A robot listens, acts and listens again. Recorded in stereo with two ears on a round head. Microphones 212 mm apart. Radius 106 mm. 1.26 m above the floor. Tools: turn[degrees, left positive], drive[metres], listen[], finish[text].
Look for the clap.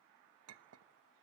Action: listen[]
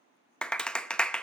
Action: turn[30]
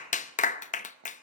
Thought: So it is at 145° left.
Action: turn[145]
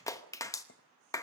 Thought: The clap is now 15° left.
Action: turn[15]
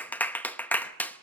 Thought: The clap is now 10° left.
Action: turn[10]
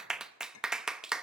Action: finish[Facing the clap, under 1 m away.]